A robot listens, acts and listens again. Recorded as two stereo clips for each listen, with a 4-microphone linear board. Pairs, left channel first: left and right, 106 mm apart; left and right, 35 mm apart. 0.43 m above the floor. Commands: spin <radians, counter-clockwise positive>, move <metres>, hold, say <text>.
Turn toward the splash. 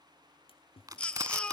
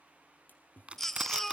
spin 1.05
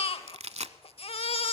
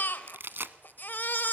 hold
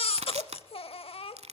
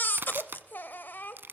say I heard a splash, but can't make it out now. It was about straight ahead or 60° left.